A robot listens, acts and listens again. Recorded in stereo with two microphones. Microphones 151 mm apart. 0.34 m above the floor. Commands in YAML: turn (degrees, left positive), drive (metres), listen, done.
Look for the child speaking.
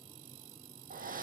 listen: true
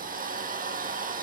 listen: true
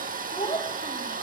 turn: 45
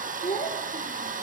turn: 95
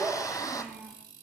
done: "Facing the child speaking, over 4 m away."